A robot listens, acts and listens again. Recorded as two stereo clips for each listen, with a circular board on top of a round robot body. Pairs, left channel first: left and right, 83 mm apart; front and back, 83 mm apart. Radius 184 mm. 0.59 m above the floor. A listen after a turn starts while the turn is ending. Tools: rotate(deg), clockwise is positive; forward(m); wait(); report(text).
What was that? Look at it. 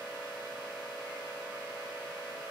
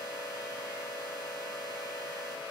wait()
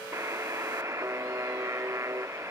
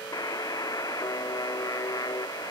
rotate(40)
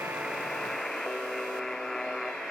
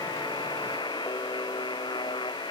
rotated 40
report("Facing the buzzer.")